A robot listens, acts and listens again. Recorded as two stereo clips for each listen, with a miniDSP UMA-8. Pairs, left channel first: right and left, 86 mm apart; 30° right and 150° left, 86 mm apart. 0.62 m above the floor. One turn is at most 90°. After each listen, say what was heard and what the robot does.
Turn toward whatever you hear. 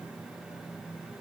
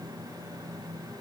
Keep listening.
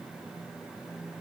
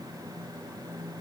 Keep listening.
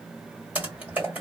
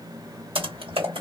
The typing on a keyboard: 160° left. Turn 90° left.
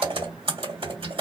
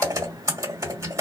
The typing on a keyboard is now 95° left. Turn 90° left.
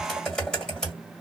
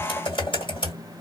The typing on a keyboard is now 10° right. Turn 10° right.
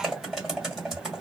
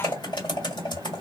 Found it: typing on a keyboard, straight ahead, 1 to 2 m away.